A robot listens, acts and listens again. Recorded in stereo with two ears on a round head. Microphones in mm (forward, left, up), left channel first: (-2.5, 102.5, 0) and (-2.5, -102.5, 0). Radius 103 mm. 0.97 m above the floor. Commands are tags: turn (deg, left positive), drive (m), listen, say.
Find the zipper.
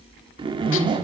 <turn deg="-20"/>
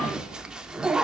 <say>Facing the zipper, 1 to 2 m away.</say>